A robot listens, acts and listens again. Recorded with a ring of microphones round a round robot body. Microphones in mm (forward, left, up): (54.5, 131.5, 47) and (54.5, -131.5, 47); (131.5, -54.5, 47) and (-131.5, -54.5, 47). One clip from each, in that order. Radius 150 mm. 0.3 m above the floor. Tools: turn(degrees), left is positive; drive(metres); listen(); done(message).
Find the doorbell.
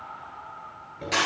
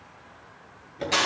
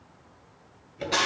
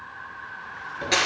listen()
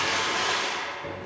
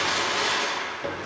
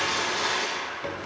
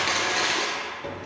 listen()
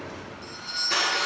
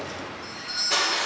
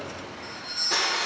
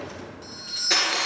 turn(degrees=145)
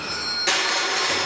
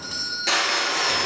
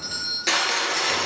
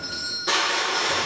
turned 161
turn(degrees=-15)
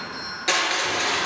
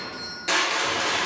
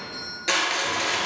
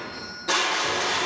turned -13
done("Facing the doorbell.")